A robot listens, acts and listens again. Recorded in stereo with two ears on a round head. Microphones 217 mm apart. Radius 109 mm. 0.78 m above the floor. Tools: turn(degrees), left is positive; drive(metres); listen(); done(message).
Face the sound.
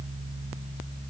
listen()
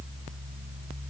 listen()
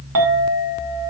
turn(degrees=-60)
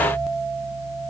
listen()
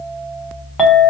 done("Facing the clink.")